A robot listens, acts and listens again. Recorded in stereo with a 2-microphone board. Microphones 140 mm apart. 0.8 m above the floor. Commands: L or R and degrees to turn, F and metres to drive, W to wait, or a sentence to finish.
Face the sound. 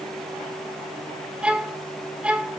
R30
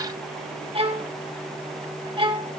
R140
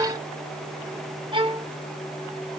R35
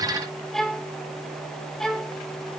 Found it: a violin, straight ahead, 1 to 2 m away.